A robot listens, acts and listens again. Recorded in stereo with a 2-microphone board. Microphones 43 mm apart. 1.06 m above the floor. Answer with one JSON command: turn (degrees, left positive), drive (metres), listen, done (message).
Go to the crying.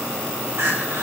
{"turn": -90}
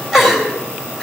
{"drive": 1.0}
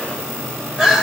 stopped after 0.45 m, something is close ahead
{"turn": -10}
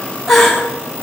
{"done": "Blocked. The crying is further on, straight ahead."}